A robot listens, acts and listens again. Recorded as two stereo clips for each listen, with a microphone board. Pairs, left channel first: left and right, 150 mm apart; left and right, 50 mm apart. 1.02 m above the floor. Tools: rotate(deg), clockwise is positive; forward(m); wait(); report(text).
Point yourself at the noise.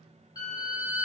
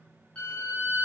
rotate(-30)
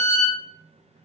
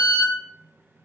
report("Found it: a violin, straight ahead, 1 to 2 m away.")